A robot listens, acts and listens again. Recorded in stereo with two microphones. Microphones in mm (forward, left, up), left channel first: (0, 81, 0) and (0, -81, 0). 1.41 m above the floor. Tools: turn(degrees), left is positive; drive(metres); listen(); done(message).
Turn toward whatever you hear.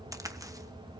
turn(degrees=-20)
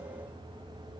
listen()
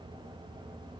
done("I heard a crack, but can't make it out now. It was about straight ahead or 140° right.")